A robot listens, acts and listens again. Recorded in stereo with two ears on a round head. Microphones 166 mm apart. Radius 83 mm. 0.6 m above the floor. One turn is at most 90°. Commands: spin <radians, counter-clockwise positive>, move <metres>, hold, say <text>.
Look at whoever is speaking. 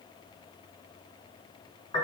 hold
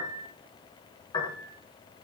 hold
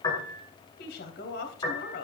spin 1.05
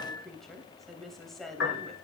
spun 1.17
say Found it: a woman speaking, straight ahead, 2 to 4 m away.